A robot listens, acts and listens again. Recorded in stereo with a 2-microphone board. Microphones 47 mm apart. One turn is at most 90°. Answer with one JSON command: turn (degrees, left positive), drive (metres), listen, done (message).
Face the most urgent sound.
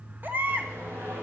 {"turn": -40}
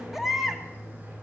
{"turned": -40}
{"done": "Facing the baby crying, 1 to 2 m away."}